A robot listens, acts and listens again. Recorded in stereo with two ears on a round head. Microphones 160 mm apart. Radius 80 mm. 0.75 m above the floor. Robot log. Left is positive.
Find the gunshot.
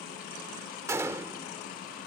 cmd yaw -30
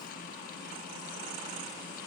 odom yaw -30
cmd idle
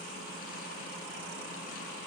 end: I heard a gunshot, but can't make it out now. It was about 15° left or 135° right.